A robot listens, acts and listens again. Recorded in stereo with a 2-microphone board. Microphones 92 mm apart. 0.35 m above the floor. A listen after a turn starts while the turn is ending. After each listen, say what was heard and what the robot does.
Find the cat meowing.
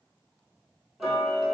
Keep listening.
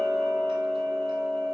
Keep listening.
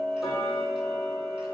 I can't make out a cat meowing, only ticking.